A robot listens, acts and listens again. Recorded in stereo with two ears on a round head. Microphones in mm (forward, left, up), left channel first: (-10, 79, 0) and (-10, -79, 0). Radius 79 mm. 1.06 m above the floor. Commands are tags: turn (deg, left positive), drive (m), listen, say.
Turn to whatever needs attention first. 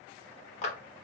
<listen/>
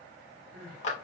<turn deg="-90"/>
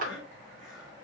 <say>Facing the crying.</say>